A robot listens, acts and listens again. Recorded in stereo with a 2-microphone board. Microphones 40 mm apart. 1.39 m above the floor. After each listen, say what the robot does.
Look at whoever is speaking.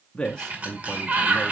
Turn 20° left.
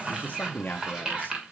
Turn 140° left.
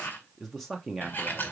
Facing the man speaking.